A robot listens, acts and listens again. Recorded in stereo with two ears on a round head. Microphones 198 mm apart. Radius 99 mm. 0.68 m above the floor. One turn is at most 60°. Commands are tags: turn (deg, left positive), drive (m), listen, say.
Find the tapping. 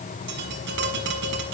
<turn deg="-55"/>
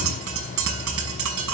<turn deg="-60"/>
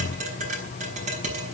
<turn deg="-35"/>
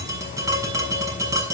<turn deg="-15"/>
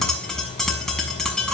<say>Found it: tapping, straight ahead.</say>